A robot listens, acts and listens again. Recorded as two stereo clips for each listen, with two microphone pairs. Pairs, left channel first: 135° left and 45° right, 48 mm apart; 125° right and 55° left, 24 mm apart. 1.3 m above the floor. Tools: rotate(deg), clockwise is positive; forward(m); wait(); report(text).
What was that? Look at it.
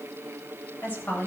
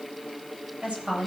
rotate(-75)
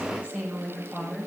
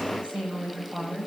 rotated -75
rotate(-15)
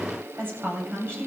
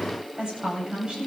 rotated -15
report("Found it: a woman speaking, straight ahead.")